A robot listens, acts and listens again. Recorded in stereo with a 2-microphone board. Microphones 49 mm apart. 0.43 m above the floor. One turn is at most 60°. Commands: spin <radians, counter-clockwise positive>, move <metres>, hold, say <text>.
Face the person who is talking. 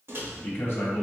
spin 0.87
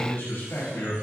spin 1.05
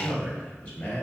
spin 0.44
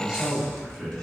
say Found it: a man speaking, straight ahead.